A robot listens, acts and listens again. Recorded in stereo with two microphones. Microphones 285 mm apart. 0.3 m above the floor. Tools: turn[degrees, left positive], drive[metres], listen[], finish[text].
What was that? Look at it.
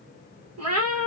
Thought: The cat meowing: about 55° right or 125° right.
Action: turn[-55]
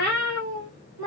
Thought: So it is at 85° right.
Action: turn[-85]
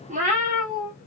Thought: The cat meowing is now 30° right.
Action: turn[-30]
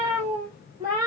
Thought: The cat meowing is now 10° right.
Action: turn[-10]
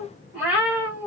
Action: finish[Facing the cat meowing, 2 to 4 m away.]